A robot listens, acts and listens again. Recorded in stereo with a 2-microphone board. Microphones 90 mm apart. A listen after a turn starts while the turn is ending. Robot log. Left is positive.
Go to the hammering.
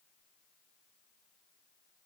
cmd idle
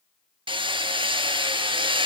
note: The hammering: about 75° right or 105° right.
cmd yaw -75
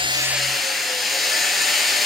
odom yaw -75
cmd fwd 1.0
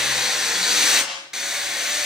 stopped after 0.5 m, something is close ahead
end: Blocked. The hammering is further on, straight ahead.